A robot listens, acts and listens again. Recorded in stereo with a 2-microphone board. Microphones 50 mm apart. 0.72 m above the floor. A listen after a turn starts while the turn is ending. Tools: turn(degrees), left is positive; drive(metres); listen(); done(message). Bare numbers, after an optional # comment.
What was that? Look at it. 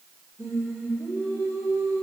# The singing: about 70° right or 110° right.
turn(-70)
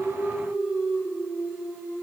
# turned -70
# So it is at 40° right.
turn(-40)
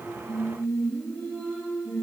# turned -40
# The singing is now 10° left.
turn(10)
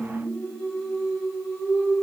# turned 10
done("Facing the singing, over 4 m away.")